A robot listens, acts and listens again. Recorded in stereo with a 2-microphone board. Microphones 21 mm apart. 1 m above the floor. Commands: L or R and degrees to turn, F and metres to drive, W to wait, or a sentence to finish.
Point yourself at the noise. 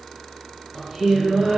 R40
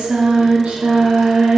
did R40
R105
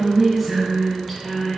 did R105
L15
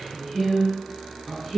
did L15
L15
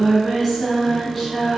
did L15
L10
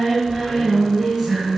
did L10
Facing the singing, 2 to 4 m away.